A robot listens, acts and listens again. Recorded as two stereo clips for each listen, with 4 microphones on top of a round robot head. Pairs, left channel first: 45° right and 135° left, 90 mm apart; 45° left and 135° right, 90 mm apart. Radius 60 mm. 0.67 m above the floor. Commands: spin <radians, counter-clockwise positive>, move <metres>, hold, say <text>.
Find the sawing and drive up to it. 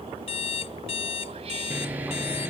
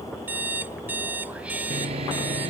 spin -2.71
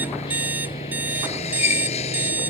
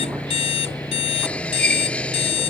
spin -0.52
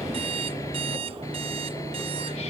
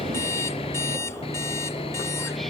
spin 0.26
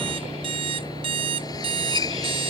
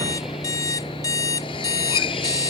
move 1.0
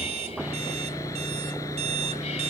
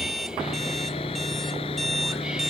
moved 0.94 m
spin 0.26
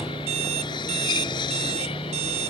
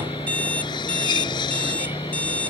move 1.0
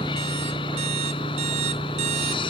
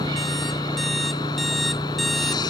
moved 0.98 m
move 1.0
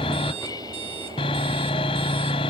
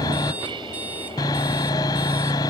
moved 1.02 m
move 1.0
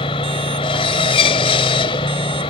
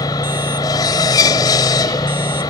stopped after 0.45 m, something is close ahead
say Arrived at the sawing, straight ahead.